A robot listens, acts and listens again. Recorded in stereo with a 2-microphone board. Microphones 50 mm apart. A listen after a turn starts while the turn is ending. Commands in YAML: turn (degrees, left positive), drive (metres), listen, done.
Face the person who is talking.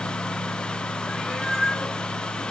listen: true
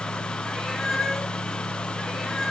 listen: true
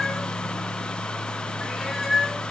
done: "I can't make out anyone speaking, only a cat meowing."